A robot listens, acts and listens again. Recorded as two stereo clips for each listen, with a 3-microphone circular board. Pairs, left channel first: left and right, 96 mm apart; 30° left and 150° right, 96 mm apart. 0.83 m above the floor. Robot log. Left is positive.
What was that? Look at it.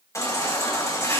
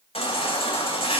note: The baby crying: 30° left.
cmd yaw +30
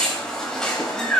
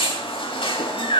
end: Found it: a baby crying, straight ahead, 2 to 4 m away.